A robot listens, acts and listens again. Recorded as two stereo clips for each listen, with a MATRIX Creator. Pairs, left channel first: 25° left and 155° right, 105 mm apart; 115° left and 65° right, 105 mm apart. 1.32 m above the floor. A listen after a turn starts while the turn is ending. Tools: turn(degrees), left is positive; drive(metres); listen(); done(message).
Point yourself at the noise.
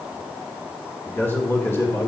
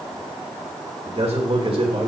turn(degrees=-40)
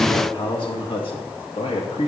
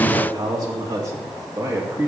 done("Found it: a man speaking, straight ahead.")